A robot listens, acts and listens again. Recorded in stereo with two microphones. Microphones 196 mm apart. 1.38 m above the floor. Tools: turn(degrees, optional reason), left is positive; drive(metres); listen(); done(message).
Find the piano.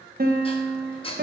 turn(degrees=-50, reason="The piano: about 50° right or 130° right.")
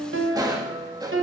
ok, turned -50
turn(degrees=-85, reason="So it is at 85° right.")
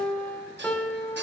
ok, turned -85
done("Found it: a piano, straight ahead, 1 to 2 m away.")